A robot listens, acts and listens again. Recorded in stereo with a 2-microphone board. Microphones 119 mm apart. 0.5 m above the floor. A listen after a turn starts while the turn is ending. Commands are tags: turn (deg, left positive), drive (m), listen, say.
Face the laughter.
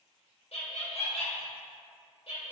<turn deg="60"/>
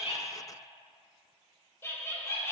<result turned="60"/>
<turn deg="25"/>
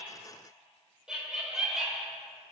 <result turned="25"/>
<say>Facing the laughter.</say>